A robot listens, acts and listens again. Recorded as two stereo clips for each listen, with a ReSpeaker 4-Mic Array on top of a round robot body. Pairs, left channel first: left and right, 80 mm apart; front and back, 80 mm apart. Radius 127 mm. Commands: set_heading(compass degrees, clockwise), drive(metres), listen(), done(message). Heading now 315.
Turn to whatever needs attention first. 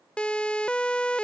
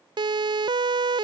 set_heading(150)
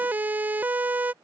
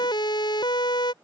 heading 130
set_heading(150)
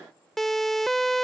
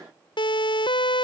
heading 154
done("Found it: a siren, straight ahead.")